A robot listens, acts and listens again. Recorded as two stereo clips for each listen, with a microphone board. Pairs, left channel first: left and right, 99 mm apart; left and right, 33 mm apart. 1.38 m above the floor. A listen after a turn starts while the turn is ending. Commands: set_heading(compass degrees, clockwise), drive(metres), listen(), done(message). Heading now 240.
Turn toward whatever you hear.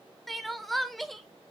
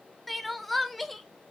set_heading(210)
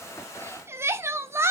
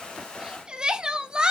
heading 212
set_heading(237)
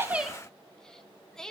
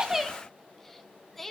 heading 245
done("Found it: crying, straight ahead.")